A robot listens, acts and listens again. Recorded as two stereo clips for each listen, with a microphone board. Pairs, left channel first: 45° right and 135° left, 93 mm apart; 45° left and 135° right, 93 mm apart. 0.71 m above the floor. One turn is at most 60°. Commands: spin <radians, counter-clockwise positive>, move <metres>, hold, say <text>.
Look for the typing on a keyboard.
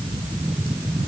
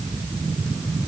hold
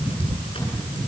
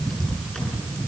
hold
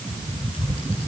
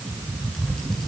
say I can't make out typing on a keyboard.